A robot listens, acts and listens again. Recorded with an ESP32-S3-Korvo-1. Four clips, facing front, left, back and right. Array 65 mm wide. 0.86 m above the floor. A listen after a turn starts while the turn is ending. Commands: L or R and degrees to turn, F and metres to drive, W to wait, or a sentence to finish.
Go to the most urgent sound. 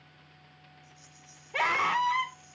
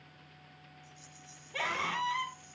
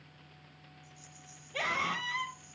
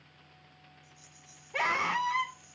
R20
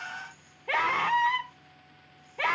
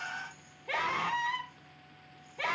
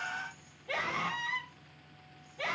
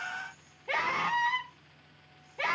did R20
F1.0
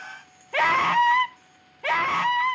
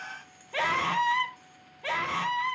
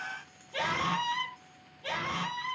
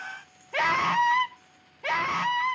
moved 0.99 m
R15
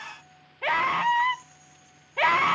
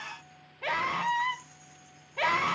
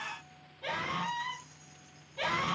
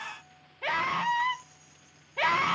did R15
F1.0
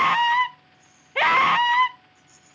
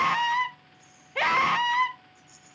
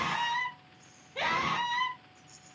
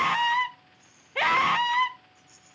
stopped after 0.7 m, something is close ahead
I am next to the scream.